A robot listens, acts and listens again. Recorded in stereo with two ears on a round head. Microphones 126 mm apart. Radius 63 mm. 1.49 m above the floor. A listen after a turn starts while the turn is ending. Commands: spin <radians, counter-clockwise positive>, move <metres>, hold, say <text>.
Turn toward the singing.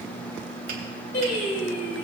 spin 1.05
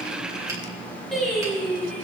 say Facing the singing.